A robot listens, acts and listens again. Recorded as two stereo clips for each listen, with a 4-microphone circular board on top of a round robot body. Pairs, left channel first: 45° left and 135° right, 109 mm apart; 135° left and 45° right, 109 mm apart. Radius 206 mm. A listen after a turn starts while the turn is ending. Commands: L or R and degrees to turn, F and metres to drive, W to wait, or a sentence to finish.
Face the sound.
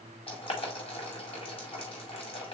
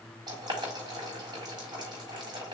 Facing the boiling.